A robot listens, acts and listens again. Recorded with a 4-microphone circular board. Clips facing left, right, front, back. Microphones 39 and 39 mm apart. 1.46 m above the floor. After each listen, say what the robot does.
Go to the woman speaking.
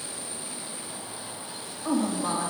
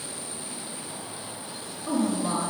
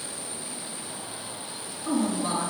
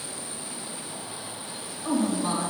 Turn 110° left.
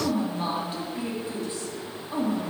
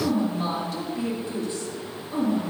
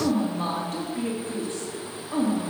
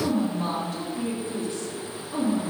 Turn 30° left.
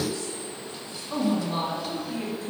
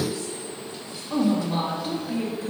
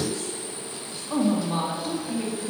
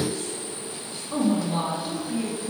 Turn 15° right.
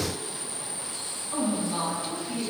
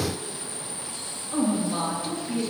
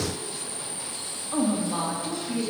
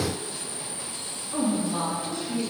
Drive 1.0 m forward.
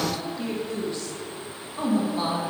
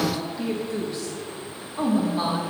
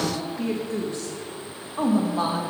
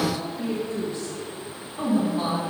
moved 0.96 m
Turn 10° right.
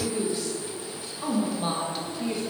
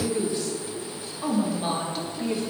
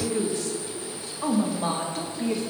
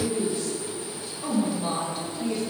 Drive 1.0 m forward.
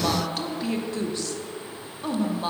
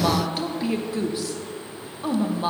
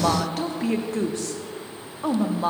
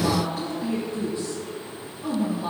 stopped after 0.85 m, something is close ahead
Turn 10° right.
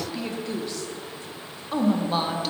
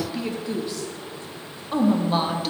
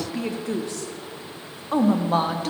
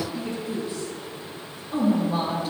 I am next to the woman speaking.